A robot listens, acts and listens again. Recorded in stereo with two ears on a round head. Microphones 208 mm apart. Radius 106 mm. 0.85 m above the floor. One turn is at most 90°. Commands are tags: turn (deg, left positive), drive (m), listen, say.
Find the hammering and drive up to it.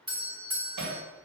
<turn deg="-90"/>
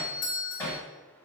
<turn deg="10"/>
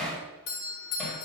<drive m="1.0"/>
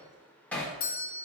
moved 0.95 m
<drive m="1.0"/>
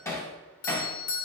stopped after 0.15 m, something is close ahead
<turn deg="10"/>
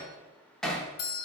<say>I am next to the hammering.</say>